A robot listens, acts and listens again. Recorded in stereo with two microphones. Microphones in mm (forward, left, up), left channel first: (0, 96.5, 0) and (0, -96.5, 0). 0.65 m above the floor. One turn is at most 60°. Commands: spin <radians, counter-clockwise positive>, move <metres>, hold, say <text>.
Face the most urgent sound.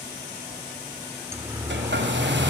spin -0.52
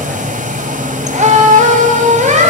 spin -1.05
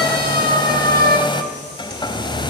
spin -1.05
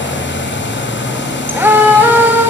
spin -0.26
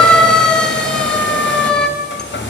say Found it: a siren, straight ahead.